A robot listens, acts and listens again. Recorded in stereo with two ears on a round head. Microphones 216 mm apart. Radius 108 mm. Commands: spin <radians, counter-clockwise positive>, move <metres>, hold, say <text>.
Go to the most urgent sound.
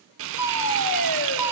spin 0.87
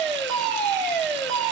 move 1.0
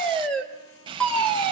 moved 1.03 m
move 1.0
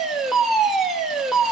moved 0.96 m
move 1.0
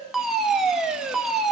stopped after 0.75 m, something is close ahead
say I am next to the fire alarm.